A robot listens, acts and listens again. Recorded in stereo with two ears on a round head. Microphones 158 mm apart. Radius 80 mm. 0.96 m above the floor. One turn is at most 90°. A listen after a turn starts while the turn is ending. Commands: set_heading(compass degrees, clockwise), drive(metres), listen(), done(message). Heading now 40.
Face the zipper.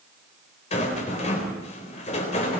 listen()
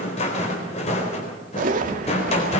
set_heading(90)
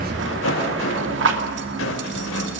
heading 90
set_heading(170)
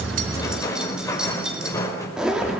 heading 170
done("Found it: a zipper, straight ahead, 2 to 4 m away.")